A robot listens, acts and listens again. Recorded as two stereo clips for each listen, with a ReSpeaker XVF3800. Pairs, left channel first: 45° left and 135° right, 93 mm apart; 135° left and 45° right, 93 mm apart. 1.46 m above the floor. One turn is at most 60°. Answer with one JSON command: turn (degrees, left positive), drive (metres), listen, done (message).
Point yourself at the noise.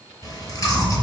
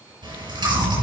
{"turn": -10}
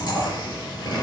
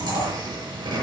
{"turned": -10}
{"done": "Found it: chewing, straight ahead, over 4 m away."}